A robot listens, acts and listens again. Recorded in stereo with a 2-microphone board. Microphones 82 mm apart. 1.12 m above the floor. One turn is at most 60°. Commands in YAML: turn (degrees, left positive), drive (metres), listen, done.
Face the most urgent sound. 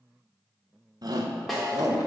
turn: -55
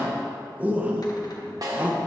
turn: -25
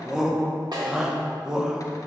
turn: -10
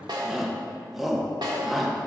done: "Facing the shout."